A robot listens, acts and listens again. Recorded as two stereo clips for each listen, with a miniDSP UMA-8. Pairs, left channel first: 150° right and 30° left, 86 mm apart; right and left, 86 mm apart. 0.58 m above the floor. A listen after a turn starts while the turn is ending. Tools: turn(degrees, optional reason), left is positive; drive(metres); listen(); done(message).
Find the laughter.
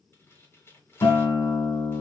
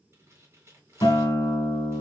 listen()
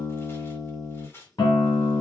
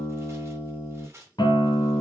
listen()
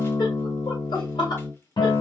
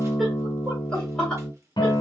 turn(degrees=-165, reason="The laughter: 165° right.")
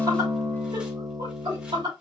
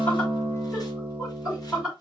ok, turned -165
turn(degrees=10, reason="The laughter is now 10° left.")
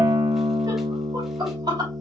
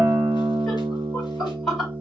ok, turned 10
done("Facing the laughter, 2 to 4 m away.")